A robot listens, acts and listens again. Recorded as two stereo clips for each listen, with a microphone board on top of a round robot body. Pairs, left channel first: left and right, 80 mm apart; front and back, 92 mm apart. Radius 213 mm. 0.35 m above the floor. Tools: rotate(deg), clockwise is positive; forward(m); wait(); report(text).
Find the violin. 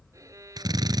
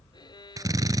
rotate(40)
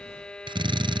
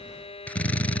rotate(-10)
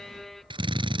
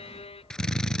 report("Found it: a violin, straight ahead.")